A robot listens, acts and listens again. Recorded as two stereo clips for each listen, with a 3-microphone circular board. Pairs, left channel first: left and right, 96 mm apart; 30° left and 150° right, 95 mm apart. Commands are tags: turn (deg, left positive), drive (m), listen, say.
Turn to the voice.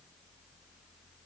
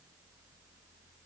<listen/>
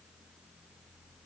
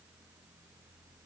<listen/>
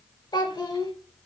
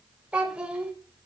<turn deg="130"/>
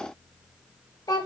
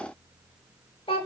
<turn deg="45"/>
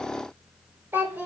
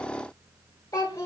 <turn deg="-25"/>
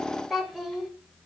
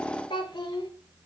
<say>Found it: a child speaking, straight ahead, 1 to 2 m away.</say>